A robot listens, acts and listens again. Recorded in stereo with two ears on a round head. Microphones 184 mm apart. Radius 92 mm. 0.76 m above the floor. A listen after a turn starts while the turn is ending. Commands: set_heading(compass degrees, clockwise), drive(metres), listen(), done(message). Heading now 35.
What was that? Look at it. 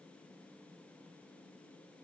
listen()
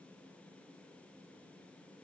listen()
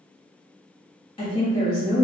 set_heading(20)
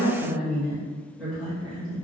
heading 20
set_heading(50)
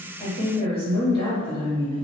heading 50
set_heading(35)
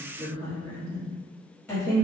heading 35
done("Found it: a woman speaking, straight ahead.")